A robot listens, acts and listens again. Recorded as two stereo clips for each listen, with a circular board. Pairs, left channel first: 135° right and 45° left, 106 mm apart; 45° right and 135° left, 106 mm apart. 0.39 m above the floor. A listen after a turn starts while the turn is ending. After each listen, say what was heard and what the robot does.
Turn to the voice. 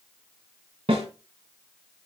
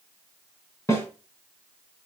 Keep listening.
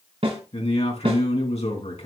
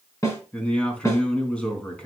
The man speaking: 125° right. Turn 125° right.
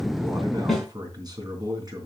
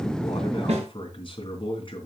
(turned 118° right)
Found it: a man speaking, straight ahead.